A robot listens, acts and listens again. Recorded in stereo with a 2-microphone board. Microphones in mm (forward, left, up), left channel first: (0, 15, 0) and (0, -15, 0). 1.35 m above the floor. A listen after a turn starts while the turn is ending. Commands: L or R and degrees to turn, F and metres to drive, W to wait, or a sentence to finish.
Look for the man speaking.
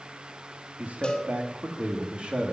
R35
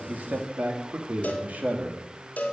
R125
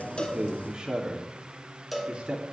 R25
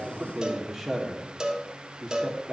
Found it: a man speaking, straight ahead, 2 to 4 m away.